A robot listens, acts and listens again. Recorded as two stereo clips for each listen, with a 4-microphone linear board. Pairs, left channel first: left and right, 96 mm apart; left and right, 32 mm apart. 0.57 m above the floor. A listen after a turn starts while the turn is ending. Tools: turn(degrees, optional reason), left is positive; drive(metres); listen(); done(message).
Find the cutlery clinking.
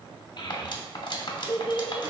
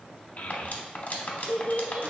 turn(degrees=50, reason="The cutlery clinking: about 50° left or 130° left.")
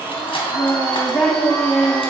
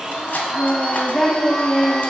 listen()
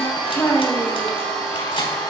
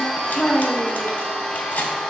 turn(degrees=70, reason="So it is at 70° left.")
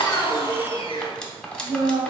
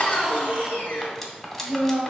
turn(degrees=10, reason="The cutlery clinking is now 10° left.")
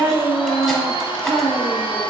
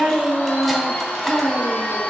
listen()
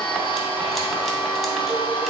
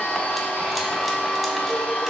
listen()
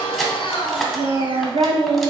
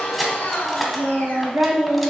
done("Found it: cutlery clinking, straight ahead, under 1 m away.")